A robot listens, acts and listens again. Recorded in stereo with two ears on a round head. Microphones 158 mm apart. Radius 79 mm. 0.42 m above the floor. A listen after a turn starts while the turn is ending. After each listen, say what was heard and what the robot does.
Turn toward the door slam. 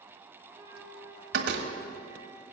The door slam: about 70° right or 110° right. Turn 70° right.
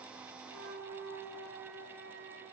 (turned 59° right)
Keep listening.
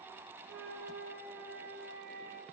I heard a door slam, but can't make it out now. It was about 10° right or 50° right.